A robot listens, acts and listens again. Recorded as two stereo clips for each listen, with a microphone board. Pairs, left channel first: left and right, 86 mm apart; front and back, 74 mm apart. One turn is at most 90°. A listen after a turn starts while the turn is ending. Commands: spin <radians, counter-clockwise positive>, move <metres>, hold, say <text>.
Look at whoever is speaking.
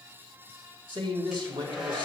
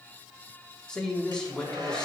spin -1.40
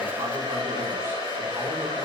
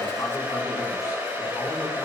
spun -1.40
hold
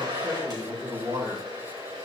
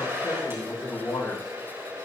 spin -0.52
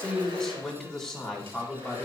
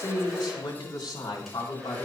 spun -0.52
say Found it: a man speaking, straight ahead, 2 to 4 m away.